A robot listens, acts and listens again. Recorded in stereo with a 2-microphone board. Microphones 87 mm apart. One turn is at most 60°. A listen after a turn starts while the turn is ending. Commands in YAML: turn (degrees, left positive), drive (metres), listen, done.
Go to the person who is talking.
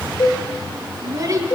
turn: -40
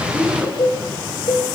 drive: 1.0
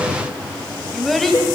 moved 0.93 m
drive: 1.0
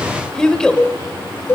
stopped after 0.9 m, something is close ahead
turn: 10
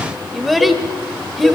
done: "I am next to the child speaking."